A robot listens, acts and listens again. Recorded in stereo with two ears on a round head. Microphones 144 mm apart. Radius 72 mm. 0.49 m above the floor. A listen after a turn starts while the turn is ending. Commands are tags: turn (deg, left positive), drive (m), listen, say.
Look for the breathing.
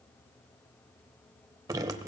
<listen/>
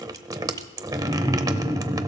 <listen/>
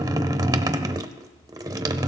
<say>I can't make out breathing, only dripping.</say>